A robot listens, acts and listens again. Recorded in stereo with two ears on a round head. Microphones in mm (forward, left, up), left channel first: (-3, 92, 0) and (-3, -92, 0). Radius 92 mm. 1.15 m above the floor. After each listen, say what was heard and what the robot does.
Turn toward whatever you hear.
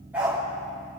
Turn 30° right.
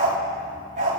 So it is at 140° right. Turn 140° right.
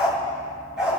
Facing the dog barking.